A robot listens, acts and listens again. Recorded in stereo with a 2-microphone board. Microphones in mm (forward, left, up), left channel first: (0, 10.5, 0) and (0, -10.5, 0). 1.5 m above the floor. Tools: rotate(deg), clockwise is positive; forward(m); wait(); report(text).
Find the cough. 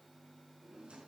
wait()
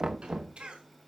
rotate(65)
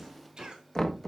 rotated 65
wait()
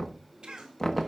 rotate(50)
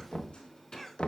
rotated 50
rotate(-15)
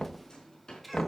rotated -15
report("Facing the cough, 2 to 4 m away.")